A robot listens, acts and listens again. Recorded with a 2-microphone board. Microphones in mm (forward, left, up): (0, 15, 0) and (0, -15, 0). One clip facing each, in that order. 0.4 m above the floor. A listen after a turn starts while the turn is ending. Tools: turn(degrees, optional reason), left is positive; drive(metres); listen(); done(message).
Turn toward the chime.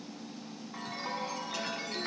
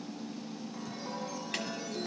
turn(degrees=55, reason="The chime: about 55° left or 125° left.")
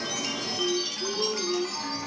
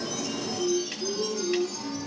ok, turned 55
turn(degrees=70, reason="So it is at 70° left.")
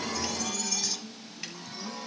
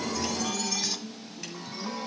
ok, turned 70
turn(degrees=-10, reason="The chime is now 10° right.")
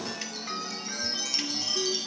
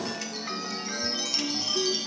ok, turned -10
done("Found it: a chime, straight ahead.")